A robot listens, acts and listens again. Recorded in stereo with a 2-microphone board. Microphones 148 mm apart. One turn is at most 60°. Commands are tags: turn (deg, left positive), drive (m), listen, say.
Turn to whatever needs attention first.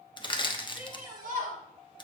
<turn deg="-60"/>
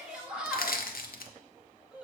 <say>Found it: a shout, straight ahead.</say>